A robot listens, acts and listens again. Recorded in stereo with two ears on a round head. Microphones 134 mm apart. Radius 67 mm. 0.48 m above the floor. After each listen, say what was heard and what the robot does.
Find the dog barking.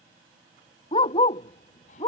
The dog barking: about 30° left or 150° left. Turn 30° left.
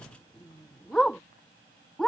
Found it: a dog barking, straight ahead.